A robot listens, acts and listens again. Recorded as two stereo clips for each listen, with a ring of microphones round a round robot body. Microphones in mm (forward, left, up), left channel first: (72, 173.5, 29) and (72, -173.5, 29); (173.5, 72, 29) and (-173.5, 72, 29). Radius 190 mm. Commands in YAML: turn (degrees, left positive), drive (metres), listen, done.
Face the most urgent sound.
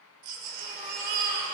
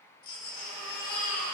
turn: -70
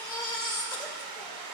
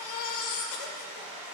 turn: 10
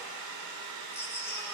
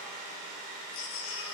turn: 10
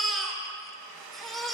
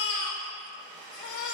done: "Found it: a baby crying, straight ahead, 2 to 4 m away."